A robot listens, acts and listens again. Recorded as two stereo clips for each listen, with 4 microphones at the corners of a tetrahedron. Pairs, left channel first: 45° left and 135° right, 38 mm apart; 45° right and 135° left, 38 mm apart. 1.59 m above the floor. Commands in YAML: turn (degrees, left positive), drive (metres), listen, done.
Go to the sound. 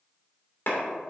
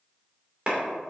turn: 75
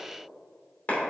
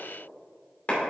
drive: 1.0
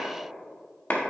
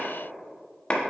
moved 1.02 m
turn: 10
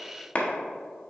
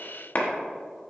drive: 1.0
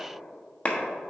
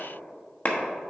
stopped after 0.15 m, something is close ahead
done: "Arrived at the clap, straight ahead."